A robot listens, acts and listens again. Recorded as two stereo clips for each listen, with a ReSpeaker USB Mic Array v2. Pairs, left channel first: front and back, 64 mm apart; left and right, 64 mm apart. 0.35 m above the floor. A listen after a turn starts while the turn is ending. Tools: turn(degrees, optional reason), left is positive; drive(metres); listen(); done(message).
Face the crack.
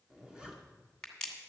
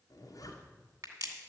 turn(degrees=-80, reason="The crack: 80° right.")
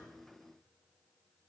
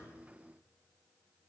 done("Facing where the crack came from. I can't hear it now.")